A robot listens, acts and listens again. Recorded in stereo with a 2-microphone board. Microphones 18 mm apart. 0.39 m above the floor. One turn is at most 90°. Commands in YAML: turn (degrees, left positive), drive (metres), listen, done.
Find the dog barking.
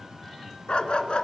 turn: 70
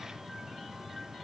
listen: true
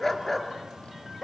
turn: 10
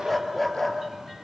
done: "Found it: a dog barking, straight ahead, 2 to 4 m away."